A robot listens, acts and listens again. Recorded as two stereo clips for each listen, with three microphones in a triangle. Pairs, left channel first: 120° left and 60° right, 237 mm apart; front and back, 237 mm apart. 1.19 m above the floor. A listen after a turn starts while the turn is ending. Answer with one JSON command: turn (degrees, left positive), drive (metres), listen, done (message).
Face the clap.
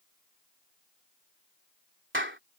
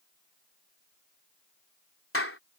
{"turn": -25}
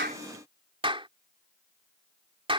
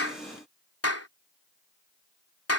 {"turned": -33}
{"done": "Facing the clap."}